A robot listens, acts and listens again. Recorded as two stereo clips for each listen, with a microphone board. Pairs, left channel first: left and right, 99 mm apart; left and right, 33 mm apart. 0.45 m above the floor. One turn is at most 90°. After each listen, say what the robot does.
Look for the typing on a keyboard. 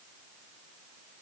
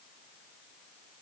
Keep listening.
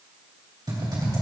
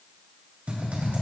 Turn 50° right.
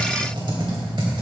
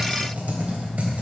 Turn 70° right.
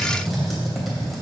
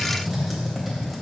Found it: typing on a keyboard, straight ahead, 2 to 4 m away.